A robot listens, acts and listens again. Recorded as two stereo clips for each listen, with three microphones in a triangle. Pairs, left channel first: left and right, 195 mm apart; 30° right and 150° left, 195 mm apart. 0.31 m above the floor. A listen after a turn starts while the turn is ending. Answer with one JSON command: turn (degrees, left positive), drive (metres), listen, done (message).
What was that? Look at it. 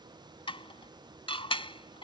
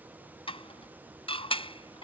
{"turn": 30}
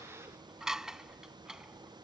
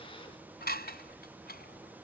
{"done": "Found it: dishes clattering, straight ahead."}